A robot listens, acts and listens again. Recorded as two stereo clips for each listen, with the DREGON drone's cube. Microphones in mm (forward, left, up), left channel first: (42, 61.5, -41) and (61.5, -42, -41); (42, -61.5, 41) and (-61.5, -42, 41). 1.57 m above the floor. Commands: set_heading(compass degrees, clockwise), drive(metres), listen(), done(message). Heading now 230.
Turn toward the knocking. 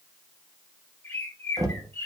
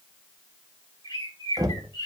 set_heading(5)
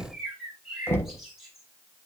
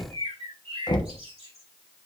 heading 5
set_heading(335)
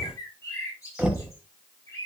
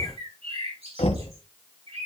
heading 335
done("Found it: knocking, straight ahead, 1 to 2 m away.")